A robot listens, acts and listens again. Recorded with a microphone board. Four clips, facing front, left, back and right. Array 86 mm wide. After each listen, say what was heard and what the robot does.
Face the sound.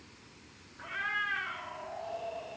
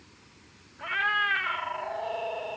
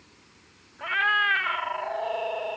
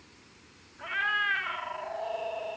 The cat meowing: 165° left. Turn 165° left.
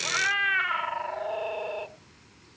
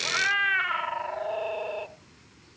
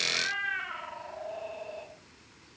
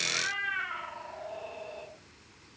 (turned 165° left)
The cat meowing is now 50° left. Turn 50° left.
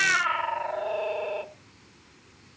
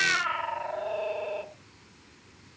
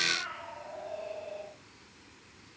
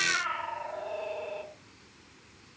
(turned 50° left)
The cat meowing is now 15° left. Turn 15° left.
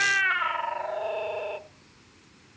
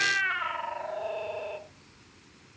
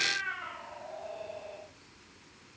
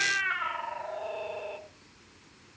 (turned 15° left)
Found it: a cat meowing, straight ahead.